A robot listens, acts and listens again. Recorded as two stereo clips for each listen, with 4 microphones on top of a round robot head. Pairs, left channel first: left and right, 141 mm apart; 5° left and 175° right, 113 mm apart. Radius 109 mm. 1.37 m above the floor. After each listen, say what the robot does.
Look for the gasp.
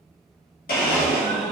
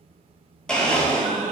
Turn 180° left.
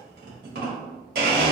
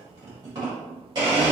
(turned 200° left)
Turn 20° right.
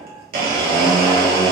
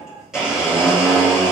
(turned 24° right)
I heard a gasp from this way, but can't make it out now.